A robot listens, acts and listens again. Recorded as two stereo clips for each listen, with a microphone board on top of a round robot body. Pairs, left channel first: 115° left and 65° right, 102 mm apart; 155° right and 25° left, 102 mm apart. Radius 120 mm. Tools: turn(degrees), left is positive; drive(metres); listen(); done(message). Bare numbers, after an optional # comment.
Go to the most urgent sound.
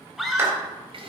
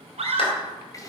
# The scream: 20° left.
turn(20)
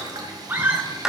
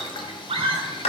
drive(1.0)
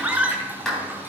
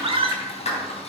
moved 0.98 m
drive(1.0)
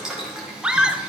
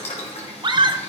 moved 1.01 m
# The scream is now 10° left.
turn(10)
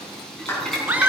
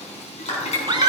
drive(1.0)
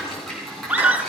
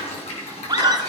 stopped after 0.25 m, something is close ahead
done("I am next to the scream.")